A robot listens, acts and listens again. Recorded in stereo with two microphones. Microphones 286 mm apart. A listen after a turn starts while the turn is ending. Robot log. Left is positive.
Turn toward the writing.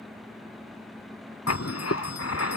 note: The writing: about 60° left or 120° left.
cmd yaw +60
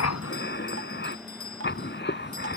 note: So it is at 45° left.
cmd yaw +45
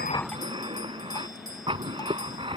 note: The writing is now 20° right.
cmd yaw -20
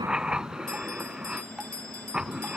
end: Found it: writing, straight ahead.